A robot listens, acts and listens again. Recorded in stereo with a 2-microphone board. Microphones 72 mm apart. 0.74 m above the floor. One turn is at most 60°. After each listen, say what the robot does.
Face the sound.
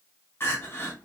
Turn 30° left.
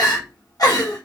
Turn 60° left.
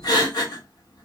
Turn 60° left.
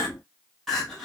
Facing the crying, 1 to 2 m away.